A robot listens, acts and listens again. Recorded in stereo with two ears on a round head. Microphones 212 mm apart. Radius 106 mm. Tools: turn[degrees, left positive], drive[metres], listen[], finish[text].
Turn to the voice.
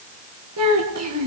Thought: The child speaking: about 65° right or 115° right.
Action: turn[-65]
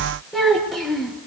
Action: finish[Found it: a child speaking, straight ahead.]